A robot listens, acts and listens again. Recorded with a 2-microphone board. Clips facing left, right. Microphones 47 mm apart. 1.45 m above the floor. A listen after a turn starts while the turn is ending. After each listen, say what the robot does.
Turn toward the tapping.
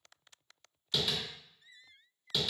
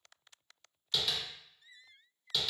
Turn 30° left.
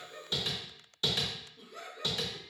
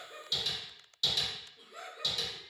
Turn 145° left.
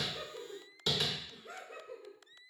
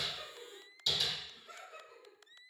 Turn 50° left.
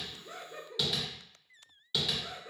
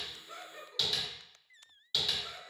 Found it: tapping, straight ahead.